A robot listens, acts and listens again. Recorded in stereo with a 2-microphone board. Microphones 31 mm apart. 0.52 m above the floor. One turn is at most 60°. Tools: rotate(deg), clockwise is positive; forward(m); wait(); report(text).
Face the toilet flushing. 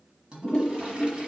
rotate(35)
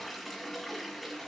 report("Facing the toilet flushing.")